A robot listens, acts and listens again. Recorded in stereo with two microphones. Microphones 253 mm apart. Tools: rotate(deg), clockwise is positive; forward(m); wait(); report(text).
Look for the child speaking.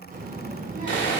rotate(35)
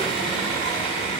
rotate(115)
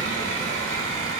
rotate(-15)
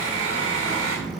report("Facing the child speaking.")